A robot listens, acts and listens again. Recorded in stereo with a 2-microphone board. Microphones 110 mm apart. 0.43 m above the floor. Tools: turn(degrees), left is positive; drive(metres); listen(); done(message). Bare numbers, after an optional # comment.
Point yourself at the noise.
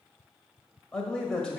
turn(30)
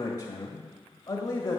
# So it is at 145° left.
turn(145)
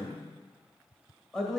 done("Facing the man speaking.")